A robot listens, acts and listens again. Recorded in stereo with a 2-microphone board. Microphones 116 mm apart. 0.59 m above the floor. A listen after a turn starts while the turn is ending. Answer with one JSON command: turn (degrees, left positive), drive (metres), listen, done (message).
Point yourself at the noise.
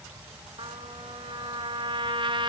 {"turn": -45}
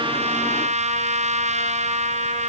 {"turn": -95}
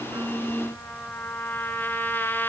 {"turn": 15}
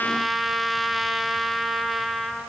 {"done": "Found it: a trumpet, straight ahead, 2 to 4 m away."}